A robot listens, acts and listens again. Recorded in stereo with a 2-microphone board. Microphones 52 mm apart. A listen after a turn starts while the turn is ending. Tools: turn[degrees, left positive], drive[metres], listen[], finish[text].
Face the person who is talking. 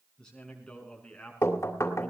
Thought: The man speaking: about 15° left or 165° left.
Action: turn[15]
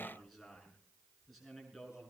Action: turn[30]
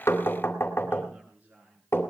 Thought: So it is at 25° right.
Action: turn[-25]
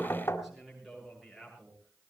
Action: finish[Facing the man speaking.]